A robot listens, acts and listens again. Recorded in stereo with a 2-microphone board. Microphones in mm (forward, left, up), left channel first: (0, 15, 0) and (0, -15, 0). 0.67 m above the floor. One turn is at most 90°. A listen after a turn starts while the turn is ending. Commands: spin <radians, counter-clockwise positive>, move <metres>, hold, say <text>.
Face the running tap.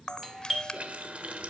spin -0.87
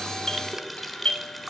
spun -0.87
say Facing the running tap, 1 to 2 m away.